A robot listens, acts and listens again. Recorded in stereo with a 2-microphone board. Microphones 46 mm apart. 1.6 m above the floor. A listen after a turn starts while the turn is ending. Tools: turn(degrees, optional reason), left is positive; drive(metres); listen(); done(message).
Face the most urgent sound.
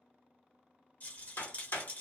listen()
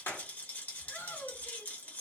turn(degrees=70, reason="The shout: about 70° left or 110° left.")
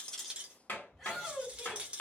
done("Facing the shout.")